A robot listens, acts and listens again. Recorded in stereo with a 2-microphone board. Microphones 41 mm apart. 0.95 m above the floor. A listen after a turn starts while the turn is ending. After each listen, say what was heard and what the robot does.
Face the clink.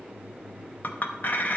The clink: about 45° left or 135° left. Turn 45° left.
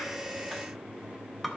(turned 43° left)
Found it: a clink, straight ahead.